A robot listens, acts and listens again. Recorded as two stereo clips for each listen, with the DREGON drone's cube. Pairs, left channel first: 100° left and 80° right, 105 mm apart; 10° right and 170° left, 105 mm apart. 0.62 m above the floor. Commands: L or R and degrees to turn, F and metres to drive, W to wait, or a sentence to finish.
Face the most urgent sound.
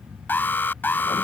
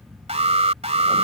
L170
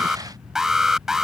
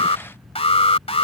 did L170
Facing the alarm.